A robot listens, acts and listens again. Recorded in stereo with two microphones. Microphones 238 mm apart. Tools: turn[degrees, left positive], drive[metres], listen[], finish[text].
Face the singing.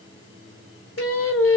Thought: The singing: about 60° left or 120° left.
Action: turn[60]
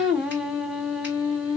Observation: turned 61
Action: finish[Facing the singing.]